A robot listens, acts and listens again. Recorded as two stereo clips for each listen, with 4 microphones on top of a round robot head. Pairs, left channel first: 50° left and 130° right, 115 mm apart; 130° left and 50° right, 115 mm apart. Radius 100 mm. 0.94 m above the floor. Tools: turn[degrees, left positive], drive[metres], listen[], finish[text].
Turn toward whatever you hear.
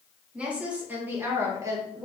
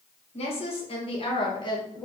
Thought: The woman speaking: straight behind.
Action: turn[180]
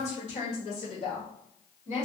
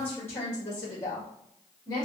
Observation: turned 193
Thought: The woman speaking is now 70° left.
Action: turn[70]
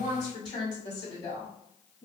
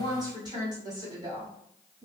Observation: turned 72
Action: finish[Facing the woman speaking.]